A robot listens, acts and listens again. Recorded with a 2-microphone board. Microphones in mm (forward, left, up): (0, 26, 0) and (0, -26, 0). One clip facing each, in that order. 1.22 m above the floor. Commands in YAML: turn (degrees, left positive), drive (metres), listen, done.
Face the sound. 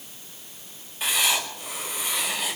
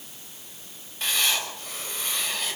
turn: 30
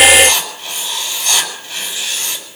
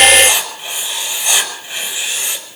turn: -20
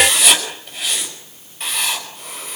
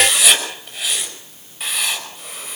done: "Facing the writing, over 4 m away."